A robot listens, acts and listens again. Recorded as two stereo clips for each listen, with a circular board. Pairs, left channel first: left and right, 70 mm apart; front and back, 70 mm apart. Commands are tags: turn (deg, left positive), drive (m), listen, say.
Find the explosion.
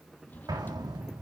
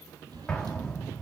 <turn deg="-80"/>
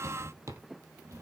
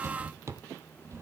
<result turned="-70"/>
<turn deg="-10"/>
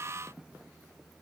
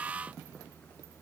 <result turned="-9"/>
<say>Facing where the explosion came from. I can't hear it now.</say>